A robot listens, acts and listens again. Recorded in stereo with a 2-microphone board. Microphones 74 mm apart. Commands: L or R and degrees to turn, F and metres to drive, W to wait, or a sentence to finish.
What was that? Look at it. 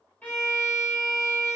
L20
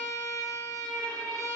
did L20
L140
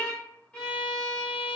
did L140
L10
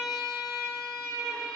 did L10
Found it: a violin, straight ahead.